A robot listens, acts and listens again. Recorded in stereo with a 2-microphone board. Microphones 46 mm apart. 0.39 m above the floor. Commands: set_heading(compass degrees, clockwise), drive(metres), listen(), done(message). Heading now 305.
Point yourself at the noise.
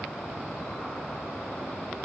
listen()
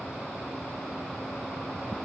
listen()
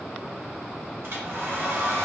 set_heading(5)
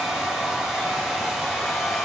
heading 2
set_heading(12)
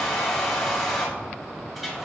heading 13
done("Facing the hair dryer.")